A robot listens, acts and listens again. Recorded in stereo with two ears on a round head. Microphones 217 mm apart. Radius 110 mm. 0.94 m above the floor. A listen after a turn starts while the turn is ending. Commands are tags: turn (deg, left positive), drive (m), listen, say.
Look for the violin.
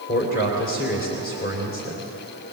<listen/>
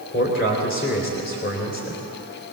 <listen/>
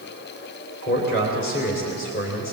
<say>I can't make out a violin, only a man speaking.</say>